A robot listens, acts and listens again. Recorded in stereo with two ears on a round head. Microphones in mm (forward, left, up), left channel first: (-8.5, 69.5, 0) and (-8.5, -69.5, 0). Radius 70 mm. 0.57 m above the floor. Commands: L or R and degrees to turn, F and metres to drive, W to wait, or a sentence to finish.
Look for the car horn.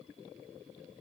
W
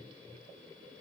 W
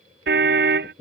R90
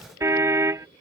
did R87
R15
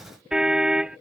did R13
Facing the car horn.